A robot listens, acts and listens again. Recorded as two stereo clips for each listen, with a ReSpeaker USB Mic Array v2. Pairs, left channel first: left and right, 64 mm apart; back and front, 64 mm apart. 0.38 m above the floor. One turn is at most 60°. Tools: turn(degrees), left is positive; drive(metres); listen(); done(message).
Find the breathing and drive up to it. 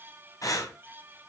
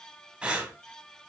turn(degrees=60)
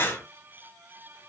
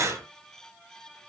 turn(degrees=40)
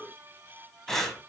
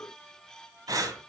drive(metres=1.0)
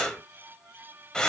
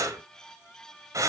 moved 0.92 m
turn(degrees=15)
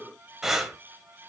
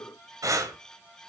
drive(metres=1.0)
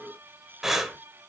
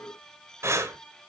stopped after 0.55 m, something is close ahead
turn(degrees=-10)
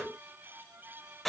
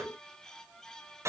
done("I am next to the breathing.")